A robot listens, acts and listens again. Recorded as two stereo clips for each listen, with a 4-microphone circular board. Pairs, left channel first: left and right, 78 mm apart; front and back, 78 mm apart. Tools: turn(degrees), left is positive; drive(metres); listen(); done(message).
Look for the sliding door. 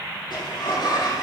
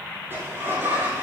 turn(degrees=115)
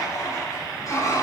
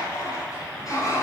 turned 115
turn(degrees=40)
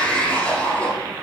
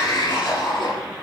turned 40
turn(degrees=15)
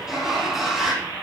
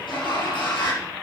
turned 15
done("Facing the sliding door.")